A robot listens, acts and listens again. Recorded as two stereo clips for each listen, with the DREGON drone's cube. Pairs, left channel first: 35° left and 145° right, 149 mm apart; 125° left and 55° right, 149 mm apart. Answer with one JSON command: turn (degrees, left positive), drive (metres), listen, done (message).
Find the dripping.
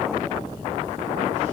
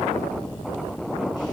{"listen": true}
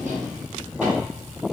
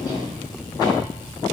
{"listen": true}
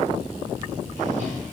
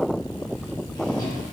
{"done": "I can't make out dripping to turn to."}